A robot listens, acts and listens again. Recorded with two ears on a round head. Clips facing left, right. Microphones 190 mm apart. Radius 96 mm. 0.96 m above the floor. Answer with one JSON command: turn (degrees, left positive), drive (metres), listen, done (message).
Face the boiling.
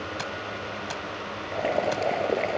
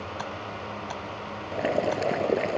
{"turn": -30}
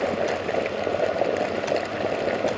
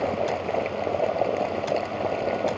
{"turn": 15}
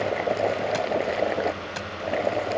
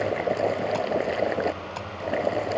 {"done": "Found it: boiling, straight ahead."}